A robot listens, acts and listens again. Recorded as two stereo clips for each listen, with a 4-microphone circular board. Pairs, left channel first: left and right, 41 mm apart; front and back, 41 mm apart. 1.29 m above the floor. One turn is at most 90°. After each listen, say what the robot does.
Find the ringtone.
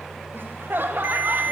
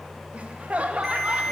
Turn 90° right.
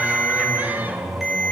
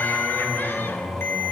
Facing the ringtone.